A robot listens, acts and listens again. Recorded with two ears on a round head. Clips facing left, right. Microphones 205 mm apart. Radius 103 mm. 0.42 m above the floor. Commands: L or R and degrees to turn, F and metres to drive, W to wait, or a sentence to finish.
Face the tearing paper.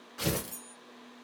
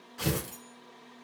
L30
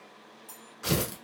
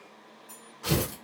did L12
L160
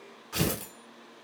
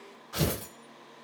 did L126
L35
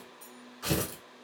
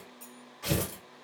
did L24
L10
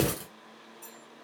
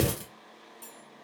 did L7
Found it: tearing paper, straight ahead, 1 to 2 m away.